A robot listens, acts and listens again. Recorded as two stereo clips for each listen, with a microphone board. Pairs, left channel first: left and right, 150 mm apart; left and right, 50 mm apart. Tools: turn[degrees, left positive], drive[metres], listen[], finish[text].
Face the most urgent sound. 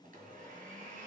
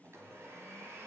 Action: listen[]
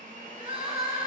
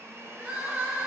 Thought: The crying: about 35° right or 145° right.
Action: turn[-35]
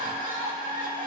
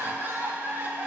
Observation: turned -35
Thought: So it is at 100° right.
Action: turn[-100]
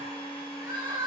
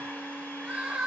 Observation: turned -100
Thought: The crying is now 30° right.
Action: turn[-30]
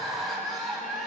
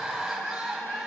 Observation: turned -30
Action: finish[Found it: crying, straight ahead, 2 to 4 m away.]